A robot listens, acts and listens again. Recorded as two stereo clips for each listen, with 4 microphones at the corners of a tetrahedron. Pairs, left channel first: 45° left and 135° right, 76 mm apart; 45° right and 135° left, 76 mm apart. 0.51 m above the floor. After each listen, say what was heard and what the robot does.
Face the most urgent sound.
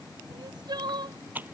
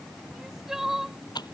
The crying: 140° right. Turn 140° right.
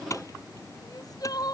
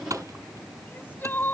The crying is now 20° left. Turn 20° left.
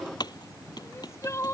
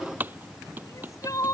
Facing the crying.